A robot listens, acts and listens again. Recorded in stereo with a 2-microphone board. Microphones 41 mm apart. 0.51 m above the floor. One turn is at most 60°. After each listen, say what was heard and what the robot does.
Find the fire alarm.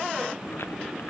Keep listening.
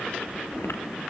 Keep listening.
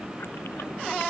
I can't make out a fire alarm, only chewing.